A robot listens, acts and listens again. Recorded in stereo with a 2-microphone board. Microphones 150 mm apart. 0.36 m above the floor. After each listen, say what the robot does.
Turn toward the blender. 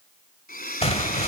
Turn 90° left.
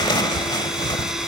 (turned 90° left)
Keep listening.
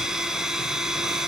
Facing the blender, 1 to 2 m away.